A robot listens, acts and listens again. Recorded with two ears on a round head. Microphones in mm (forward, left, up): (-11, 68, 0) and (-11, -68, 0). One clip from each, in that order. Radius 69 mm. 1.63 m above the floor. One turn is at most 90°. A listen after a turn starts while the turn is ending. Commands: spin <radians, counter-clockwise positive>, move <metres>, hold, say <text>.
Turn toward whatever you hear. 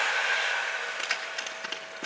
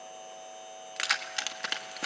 spin -0.87
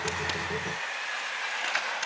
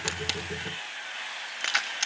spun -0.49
spin -1.57
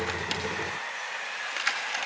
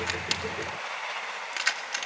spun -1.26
spin -0.35
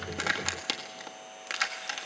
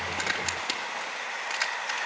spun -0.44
say Facing the keys jangling, 1 to 2 m away.